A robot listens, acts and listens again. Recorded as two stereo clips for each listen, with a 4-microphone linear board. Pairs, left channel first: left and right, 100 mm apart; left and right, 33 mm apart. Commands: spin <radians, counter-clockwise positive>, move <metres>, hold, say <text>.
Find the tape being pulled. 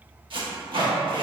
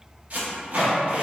spin -0.96
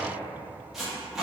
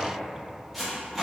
say Found it: tape being pulled, straight ahead, 1 to 2 m away.